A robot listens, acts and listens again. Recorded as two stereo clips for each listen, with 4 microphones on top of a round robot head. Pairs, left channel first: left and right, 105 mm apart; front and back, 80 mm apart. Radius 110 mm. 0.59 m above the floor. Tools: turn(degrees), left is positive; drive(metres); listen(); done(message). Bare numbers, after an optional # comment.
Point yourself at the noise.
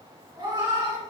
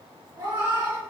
# The cat meowing: 135° right.
turn(-135)
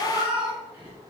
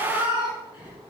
# The cat meowing is now 15° right.
turn(-15)
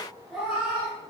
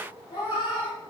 done("Found it: a cat meowing, straight ahead.")